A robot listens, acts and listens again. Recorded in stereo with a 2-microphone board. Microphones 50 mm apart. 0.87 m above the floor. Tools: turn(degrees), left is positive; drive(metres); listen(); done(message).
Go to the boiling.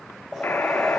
turn(degrees=-30)
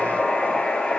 turn(degrees=25)
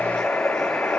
drive(metres=1.0)
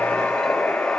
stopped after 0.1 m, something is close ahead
done("Something is in my way. I am facing the boiling but have not reached it.")